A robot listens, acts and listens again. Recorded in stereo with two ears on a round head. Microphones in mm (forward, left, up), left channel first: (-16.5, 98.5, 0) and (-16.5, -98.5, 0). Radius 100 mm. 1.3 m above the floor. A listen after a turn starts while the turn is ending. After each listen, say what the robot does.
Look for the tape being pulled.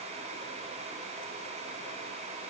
Keep listening.
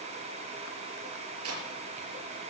Turn 90° right.
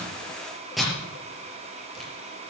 Facing the tape being pulled.